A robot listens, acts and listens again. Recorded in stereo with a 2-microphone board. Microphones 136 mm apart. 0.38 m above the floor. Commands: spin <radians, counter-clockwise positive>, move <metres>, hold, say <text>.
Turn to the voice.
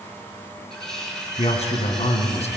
spin 0.96
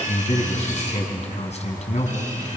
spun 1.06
spin 1.05
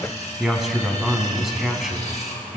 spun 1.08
say Found it: a man speaking, straight ahead, 2 to 4 m away.